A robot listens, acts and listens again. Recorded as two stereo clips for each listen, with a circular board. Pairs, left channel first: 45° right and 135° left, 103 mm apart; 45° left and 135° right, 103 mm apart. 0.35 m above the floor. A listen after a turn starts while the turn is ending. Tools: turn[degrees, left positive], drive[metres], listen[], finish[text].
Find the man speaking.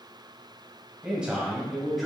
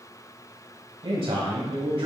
Thought: The man speaking: 135° right.
Action: turn[-135]
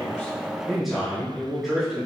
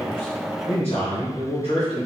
Thought: The man speaking is now 50° left.
Action: turn[50]
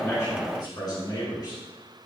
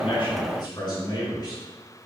Action: finish[Facing the man speaking.]